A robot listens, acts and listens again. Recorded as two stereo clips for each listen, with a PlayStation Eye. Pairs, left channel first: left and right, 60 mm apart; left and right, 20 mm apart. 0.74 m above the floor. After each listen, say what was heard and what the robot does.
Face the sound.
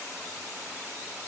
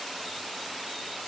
Keep listening.
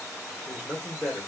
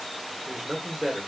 Turn 30° right.
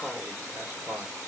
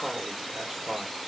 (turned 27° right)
So it is at 145° right. Turn 145° right.
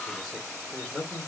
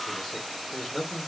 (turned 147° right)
Facing the man speaking.